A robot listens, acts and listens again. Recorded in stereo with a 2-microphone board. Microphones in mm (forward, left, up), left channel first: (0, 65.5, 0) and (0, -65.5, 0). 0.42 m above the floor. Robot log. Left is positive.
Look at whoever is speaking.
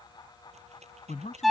note: The man speaking: about 70° left or 110° left.
cmd yaw +70
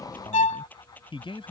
note: So it is at 45° left.
cmd yaw +45
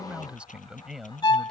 end: Facing the man speaking.